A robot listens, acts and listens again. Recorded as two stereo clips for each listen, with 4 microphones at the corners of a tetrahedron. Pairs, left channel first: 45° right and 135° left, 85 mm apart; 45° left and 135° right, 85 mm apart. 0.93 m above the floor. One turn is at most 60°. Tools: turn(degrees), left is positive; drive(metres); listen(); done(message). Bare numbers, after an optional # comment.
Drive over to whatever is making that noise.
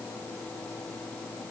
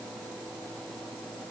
listen()
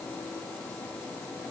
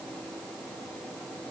listen()
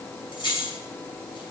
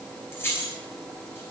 # The keys jangling: 20° right.
turn(-20)
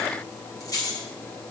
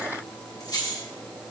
drive(1.0)
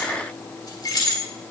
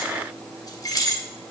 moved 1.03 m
drive(1.0)
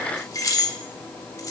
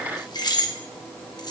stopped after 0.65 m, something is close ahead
done("Arrived at the keys jangling, straight ahead.")